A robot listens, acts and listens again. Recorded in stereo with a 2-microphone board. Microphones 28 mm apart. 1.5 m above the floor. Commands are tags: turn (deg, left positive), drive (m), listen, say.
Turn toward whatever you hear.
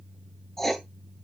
<turn deg="30"/>
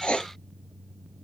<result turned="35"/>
<turn deg="130"/>
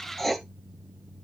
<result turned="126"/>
<say>Found it: writing, straight ahead.</say>